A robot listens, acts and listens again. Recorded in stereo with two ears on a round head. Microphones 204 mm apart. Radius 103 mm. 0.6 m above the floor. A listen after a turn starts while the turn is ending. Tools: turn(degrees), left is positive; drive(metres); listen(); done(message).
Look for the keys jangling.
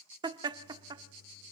listen()
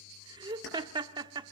turn(degrees=55)
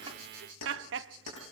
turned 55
turn(degrees=80)
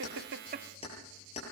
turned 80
turn(degrees=30)
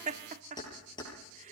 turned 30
turn(degrees=20)
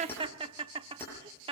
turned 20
turn(degrees=10)
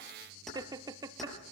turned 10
done("Found it: keys jangling, straight ahead, over 4 m away.")